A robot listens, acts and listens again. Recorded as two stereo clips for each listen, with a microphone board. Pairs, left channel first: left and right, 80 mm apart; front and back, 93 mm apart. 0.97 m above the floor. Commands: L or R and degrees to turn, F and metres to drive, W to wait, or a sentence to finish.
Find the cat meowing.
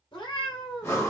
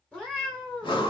L80
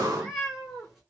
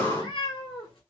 Facing the cat meowing.